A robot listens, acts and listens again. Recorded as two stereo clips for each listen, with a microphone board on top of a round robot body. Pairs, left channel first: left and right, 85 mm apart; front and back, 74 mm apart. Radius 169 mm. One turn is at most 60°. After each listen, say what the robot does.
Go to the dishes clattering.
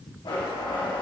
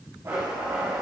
Keep listening.
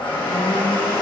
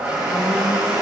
Keep listening.
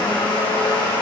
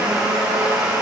I can't make out dishes clattering to turn to.